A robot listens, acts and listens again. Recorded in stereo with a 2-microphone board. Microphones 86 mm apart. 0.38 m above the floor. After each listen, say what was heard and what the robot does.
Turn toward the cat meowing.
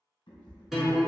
The cat meowing: about 70° left or 110° left. Turn 70° left.
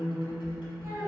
Keep listening.
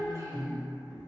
Keep listening.
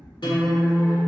So it is at 10° left. Turn 10° left.
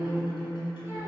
Keep listening.
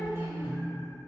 Keep listening.
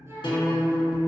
Facing where the cat meowing came from. I can't hear it now.